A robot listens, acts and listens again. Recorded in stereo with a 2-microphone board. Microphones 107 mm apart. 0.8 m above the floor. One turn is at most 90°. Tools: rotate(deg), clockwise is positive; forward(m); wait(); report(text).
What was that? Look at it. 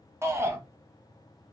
rotate(25)
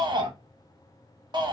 rotate(90)
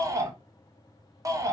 rotate(40)
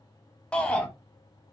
rotate(-10)
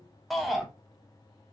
report("Found it: a shout, straight ahead.")